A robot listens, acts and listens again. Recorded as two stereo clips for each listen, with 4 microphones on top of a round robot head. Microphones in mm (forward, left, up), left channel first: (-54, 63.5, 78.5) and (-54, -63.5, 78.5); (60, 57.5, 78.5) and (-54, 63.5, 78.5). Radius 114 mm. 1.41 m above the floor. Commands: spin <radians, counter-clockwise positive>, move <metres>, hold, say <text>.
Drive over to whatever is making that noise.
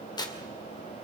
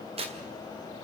spin 2.53
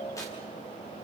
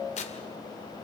spin 0.26
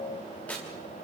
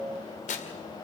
spin 0.17
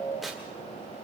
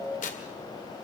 move 1.0
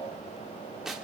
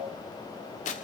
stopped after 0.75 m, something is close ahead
say I am next to the tearing paper.